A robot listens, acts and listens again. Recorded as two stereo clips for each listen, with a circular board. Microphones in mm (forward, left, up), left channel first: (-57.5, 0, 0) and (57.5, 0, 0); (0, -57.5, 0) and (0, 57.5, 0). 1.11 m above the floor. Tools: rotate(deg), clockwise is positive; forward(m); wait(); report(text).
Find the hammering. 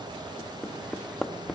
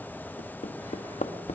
rotate(95)
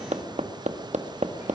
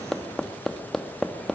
report("Found it: hammering, straight ahead.")